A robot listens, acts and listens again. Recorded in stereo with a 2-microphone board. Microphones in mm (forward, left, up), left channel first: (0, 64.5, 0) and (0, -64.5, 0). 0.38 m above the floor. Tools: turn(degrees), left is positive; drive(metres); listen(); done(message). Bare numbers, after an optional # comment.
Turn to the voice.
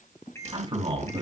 # The man speaking: about 45° right or 135° right.
turn(-45)
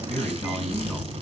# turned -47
done("Found it: a man speaking, straight ahead.")